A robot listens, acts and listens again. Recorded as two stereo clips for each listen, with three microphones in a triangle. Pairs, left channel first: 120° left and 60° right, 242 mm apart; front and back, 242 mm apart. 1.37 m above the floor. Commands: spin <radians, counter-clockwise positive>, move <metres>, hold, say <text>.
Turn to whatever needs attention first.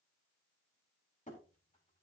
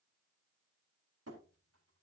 hold
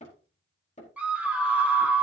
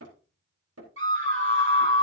spin -2.53
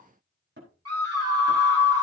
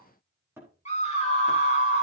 spin -1.13
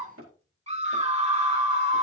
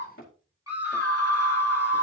say Facing the scream.